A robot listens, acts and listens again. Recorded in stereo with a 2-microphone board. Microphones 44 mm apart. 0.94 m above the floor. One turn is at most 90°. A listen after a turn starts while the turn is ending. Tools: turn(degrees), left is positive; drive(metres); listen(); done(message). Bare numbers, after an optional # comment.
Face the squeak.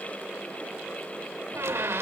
# The squeak: about 70° right or 110° right.
turn(-70)
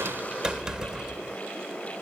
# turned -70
# So it is at 15° right.
turn(-15)
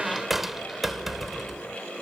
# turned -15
done("Found it: a squeak, straight ahead.")